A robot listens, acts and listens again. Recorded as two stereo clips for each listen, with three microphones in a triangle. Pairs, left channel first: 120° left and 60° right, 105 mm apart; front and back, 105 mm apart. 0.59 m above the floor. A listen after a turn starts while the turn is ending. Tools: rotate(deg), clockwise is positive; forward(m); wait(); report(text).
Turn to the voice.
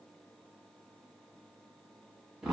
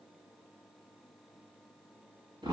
wait()
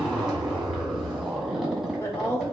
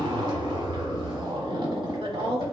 rotate(-180)
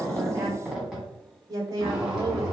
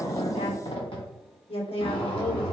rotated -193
rotate(10)
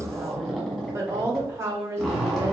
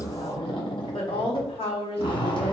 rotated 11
report("Found it: a woman speaking, straight ahead, 1 to 2 m away.")